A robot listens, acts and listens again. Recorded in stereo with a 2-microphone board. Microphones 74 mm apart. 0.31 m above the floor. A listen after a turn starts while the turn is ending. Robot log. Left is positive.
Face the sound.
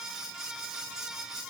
cmd idle
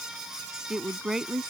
cmd yaw -30
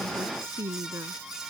note: So it is at 145° right.
cmd yaw -145
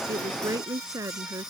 note: The woman speaking is now 45° right.
cmd yaw -45
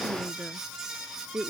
end: Facing the woman speaking.